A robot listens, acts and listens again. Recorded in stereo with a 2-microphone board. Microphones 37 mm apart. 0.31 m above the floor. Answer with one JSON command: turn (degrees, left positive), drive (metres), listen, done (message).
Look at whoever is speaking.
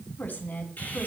{"turn": 55}
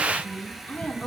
{"turn": 55}
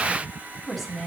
{"done": "Found it: a woman speaking, straight ahead, 2 to 4 m away."}